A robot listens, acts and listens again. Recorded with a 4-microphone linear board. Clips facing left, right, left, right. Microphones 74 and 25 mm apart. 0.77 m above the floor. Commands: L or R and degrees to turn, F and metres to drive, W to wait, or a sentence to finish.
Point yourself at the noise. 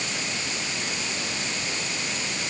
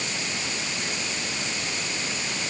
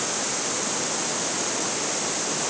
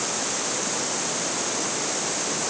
W
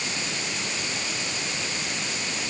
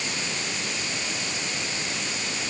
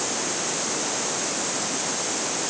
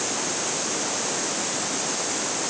W
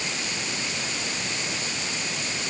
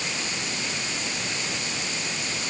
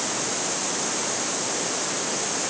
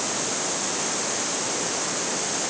I can't make out anything.